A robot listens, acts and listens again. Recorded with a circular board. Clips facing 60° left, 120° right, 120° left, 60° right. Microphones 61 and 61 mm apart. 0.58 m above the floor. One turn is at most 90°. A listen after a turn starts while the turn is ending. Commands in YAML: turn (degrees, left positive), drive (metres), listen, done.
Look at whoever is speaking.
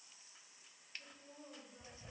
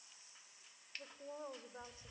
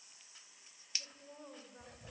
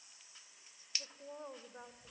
turn: -90
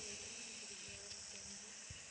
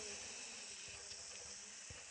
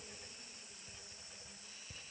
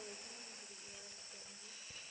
turn: -25
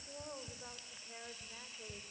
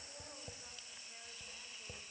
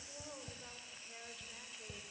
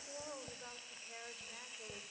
done: "Facing the woman speaking."